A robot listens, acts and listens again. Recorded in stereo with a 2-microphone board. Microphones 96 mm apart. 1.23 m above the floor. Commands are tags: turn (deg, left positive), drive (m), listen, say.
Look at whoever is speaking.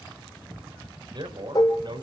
<turn deg="-55"/>
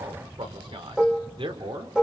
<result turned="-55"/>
<turn deg="-65"/>
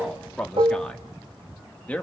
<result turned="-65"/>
<turn deg="15"/>
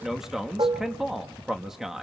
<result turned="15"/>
<say>Found it: a man speaking, straight ahead.</say>